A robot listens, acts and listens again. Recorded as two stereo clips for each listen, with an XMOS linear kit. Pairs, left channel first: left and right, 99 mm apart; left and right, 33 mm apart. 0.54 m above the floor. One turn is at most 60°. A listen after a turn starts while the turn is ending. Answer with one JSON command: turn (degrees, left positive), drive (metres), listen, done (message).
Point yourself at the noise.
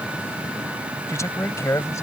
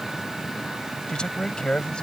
{"turn": 30}
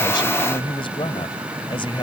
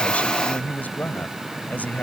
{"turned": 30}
{"turn": 60}
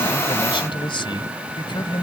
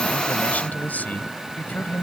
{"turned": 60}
{"turn": 60}
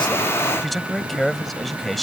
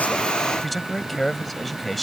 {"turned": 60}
{"done": "Found it: a man speaking, straight ahead."}